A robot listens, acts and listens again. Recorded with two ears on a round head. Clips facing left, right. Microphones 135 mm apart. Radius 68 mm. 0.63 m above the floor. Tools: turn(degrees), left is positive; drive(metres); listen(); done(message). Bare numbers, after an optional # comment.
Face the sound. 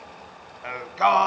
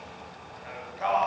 turn(90)
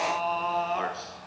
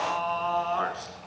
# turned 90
# So it is at 15° left.
turn(15)
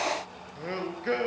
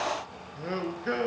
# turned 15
done("Facing the singing, 2 to 4 m away.")